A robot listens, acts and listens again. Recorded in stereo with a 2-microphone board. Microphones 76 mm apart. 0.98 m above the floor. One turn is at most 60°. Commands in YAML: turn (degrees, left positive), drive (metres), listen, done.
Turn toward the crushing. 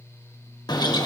listen: true
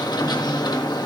listen: true
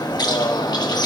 done: "I can't make out crushing to turn to."